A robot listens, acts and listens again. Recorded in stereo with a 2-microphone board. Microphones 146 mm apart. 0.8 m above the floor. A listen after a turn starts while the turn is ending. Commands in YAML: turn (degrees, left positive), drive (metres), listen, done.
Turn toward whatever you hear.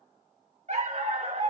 turn: -50
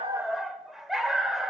done: "Facing the dog barking, 1 to 2 m away."